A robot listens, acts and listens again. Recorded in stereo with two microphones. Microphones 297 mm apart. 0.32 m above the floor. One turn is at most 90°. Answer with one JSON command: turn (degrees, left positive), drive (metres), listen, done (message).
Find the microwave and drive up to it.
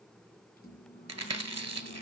{"turn": 30}
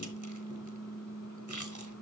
{"turn": 90}
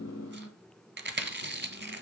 {"turn": 65}
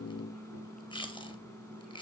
{"turn": 10}
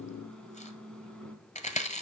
{"drive": 1.0}
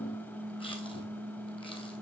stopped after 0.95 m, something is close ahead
{"turn": 10}
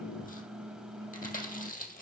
{"done": "Arrived at the microwave, straight ahead."}